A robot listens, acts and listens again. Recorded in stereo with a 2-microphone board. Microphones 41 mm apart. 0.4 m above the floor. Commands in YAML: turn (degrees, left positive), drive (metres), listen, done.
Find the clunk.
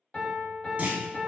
turn: -40
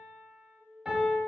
listen: true
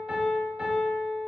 done: "I heard a clunk, but can't make it out now. It was about straight ahead or 100° right."